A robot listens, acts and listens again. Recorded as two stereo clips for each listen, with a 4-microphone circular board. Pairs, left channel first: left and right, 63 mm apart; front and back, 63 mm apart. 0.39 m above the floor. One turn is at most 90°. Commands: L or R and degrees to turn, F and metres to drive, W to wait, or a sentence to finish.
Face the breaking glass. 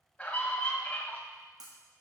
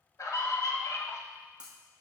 R90
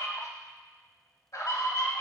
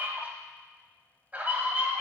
R15
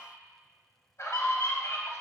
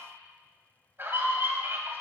Facing where the breaking glass came from. I can't hear it now.